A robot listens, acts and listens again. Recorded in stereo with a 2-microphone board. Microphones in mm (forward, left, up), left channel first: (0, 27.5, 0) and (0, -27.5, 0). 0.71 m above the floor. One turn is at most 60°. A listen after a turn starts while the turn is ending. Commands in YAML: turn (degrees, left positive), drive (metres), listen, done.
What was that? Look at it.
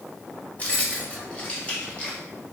turn: 20
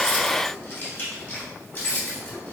turn: 35
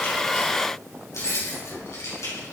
turn: 60
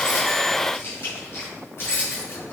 turn: 45
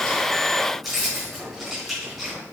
done: "Facing the keys jangling."